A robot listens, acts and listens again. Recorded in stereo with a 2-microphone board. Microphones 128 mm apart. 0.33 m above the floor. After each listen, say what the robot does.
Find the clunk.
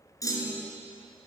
Turn 25° left.
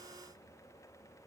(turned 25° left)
Keep listening.
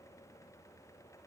I heard a clunk, but can't make it out now. It was about straight ahead or 130° left.